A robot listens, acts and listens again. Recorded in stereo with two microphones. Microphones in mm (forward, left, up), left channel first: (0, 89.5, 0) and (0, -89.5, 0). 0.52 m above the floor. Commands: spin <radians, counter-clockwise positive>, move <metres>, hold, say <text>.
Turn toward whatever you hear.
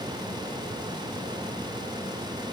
hold
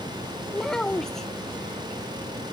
spin 0.52
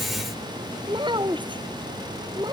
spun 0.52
spin -0.44
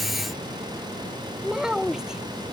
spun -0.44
say Found it: a child speaking, straight ahead.